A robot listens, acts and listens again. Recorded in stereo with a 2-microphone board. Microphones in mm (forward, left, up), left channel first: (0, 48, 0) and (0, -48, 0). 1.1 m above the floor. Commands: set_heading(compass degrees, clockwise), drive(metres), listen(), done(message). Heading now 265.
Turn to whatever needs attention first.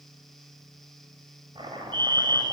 set_heading(320)
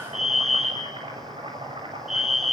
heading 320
done("Found it: a fire alarm, straight ahead.")